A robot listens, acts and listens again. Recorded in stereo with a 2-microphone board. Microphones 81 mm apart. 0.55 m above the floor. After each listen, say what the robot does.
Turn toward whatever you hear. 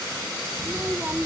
Turn 25° right.
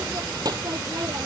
Turn 130° right.
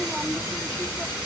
Turn 10° right.
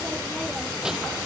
Facing the child speaking.